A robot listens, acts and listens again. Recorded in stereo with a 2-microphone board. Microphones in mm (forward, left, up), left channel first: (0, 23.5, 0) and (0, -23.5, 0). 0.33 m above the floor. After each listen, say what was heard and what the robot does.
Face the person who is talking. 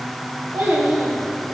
The child speaking: about 55° right or 125° right. Turn 55° right.
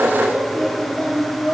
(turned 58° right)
Facing the child speaking.